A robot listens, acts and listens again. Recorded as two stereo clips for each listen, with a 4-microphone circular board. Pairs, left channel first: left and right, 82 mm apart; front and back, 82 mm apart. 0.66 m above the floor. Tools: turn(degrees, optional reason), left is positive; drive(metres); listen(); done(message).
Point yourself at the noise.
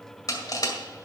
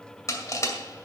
turn(degrees=50, reason="The crushing: 50° left.")
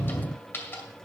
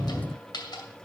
turn(degrees=25, reason="The crushing is now 25° left.")
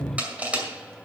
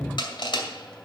turn(degrees=-15, reason="The crushing is now 15° right.")
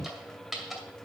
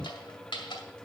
done("Facing the crushing.")